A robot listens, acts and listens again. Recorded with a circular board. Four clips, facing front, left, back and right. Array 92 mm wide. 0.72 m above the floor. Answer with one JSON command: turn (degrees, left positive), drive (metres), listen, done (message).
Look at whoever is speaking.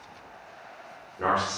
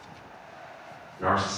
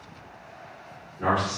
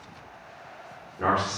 {"turn": -45}
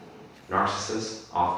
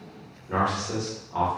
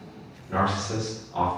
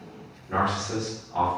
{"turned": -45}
{"turn": 15}
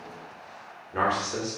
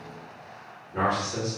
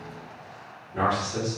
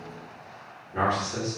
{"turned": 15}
{"done": "Facing the man speaking, 1 to 2 m away."}